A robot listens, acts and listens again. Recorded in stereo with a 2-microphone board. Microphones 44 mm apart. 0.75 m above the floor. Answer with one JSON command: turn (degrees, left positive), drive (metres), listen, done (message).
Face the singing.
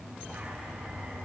{"listen": true}
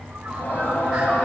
{"turn": 45}
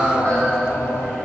{"turn": 100}
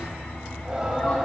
{"turn": -10}
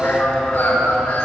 {"done": "Found it: singing, straight ahead."}